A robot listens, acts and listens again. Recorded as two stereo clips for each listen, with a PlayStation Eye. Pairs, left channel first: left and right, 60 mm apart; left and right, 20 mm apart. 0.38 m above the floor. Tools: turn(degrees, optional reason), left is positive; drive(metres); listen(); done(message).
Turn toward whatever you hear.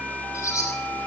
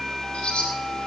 turn(degrees=65, reason="The bird: about 65° left or 115° left.")
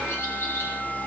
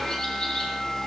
listen()
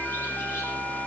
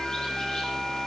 listen()
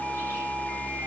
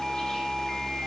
done("I heard a bird, but can't make it out now. It was about straight ahead or 50° left.")